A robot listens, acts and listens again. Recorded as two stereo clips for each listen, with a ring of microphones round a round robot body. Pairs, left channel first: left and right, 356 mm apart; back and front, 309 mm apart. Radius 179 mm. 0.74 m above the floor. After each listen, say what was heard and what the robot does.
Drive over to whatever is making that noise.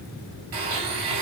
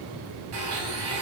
The blender: 55° right. Turn 55° right.
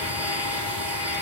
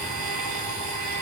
Drive 1.0 m forward.
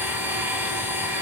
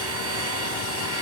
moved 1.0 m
Drive 1.0 m forward.
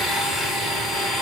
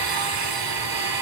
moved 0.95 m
Drive 1.0 m forward.
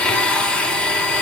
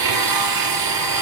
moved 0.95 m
Drive 1.0 m forward.
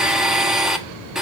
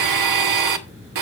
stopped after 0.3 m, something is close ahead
Arrived at the blender, straight ahead.